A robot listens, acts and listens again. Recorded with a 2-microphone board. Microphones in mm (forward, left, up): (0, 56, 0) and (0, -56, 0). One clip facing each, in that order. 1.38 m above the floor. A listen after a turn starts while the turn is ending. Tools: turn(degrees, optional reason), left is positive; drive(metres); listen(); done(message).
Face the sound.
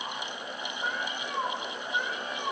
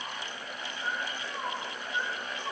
turn(degrees=55, reason="The cat meowing: about 55° left or 125° left.")
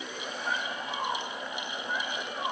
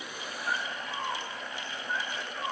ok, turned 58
turn(degrees=75, reason="So it is at 75° left.")
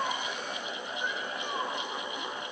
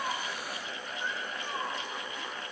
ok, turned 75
listen()
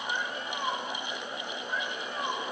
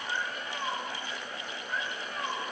turn(degrees=15, reason="The cat meowing is now 15° left.")
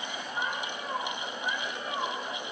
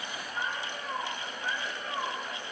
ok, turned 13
done("Found it: a cat meowing, straight ahead.")